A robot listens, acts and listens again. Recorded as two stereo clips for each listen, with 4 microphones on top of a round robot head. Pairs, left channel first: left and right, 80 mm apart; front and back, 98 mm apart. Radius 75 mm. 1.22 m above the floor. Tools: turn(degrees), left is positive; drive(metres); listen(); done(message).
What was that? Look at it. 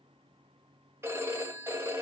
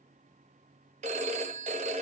turn(degrees=-165)
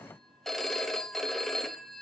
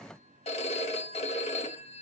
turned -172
done("Found it: a phone ringing, straight ahead.")